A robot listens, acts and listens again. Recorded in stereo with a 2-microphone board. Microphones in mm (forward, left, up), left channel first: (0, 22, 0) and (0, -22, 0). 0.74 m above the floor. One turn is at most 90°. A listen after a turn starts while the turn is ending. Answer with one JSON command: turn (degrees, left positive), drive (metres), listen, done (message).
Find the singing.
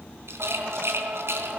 {"turn": -45}
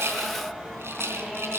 {"done": "Facing the singing."}